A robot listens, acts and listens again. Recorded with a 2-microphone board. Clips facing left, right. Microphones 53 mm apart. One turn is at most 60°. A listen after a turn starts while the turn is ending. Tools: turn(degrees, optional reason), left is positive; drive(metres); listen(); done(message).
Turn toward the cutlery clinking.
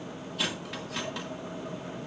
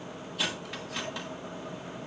turn(degrees=30)
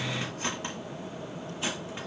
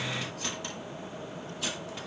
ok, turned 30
turn(degrees=60, reason="So it is at 150° left.")
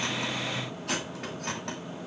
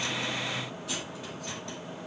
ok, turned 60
turn(degrees=60, reason="The cutlery clinking is now 80° left.")
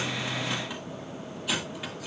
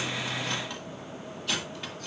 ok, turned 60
turn(degrees=10, reason="The cutlery clinking is now 10° left.")
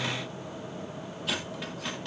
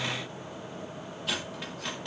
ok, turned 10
done("Found it: cutlery clinking, straight ahead, 1 to 2 m away.")